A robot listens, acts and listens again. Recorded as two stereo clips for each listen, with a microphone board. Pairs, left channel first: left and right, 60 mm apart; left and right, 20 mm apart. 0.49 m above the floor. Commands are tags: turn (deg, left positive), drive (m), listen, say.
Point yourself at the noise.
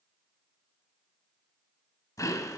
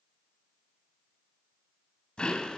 <turn deg="65"/>
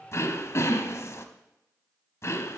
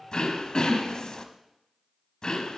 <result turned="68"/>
<turn deg="50"/>
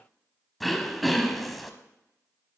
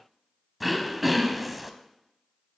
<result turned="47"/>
<say>Found it: throat clearing, straight ahead, under 1 m away.</say>